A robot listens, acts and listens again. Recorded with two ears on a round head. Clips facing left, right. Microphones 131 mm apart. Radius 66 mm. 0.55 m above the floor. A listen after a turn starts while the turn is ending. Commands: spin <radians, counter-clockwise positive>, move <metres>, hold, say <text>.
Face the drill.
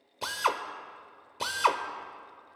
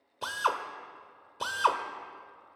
spin 0.52
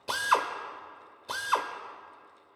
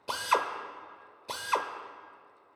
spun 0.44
spin -0.26
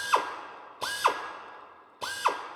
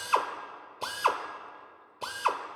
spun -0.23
say Facing the drill, under 1 m away.